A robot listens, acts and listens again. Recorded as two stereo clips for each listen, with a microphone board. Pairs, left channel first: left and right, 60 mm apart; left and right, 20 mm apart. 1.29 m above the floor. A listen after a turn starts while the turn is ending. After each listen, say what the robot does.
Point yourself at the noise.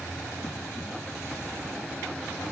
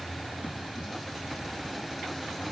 Keep listening.
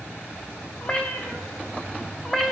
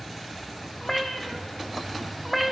Turn 30° left.
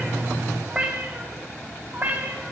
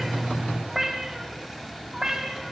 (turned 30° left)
Turn 30° right.
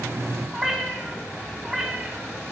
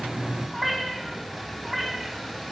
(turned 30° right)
Turn 10° right.
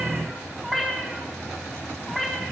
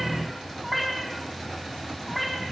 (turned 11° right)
Found it: a cat meowing, straight ahead, 2 to 4 m away.